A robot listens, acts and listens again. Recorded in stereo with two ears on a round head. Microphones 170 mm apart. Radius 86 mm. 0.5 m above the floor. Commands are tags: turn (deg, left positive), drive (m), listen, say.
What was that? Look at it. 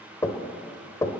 <turn deg="15"/>
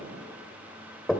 <say>Facing the knocking.</say>